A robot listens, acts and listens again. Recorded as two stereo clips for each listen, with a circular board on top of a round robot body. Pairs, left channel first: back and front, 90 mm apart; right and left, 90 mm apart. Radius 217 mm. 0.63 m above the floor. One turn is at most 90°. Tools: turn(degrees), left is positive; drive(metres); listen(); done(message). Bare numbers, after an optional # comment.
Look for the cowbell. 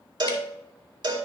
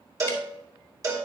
# The cowbell: 40° left.
turn(40)
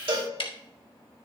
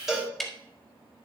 done("Facing the cowbell, 2 to 4 m away.")